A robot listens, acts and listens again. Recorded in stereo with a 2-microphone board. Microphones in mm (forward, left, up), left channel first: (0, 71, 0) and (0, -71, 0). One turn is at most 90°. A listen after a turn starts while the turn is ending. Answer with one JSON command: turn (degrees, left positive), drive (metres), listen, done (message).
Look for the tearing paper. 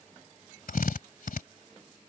{"listen": true}
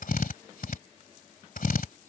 {"listen": true}
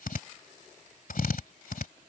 {"done": "I can't make out tearing paper to turn to."}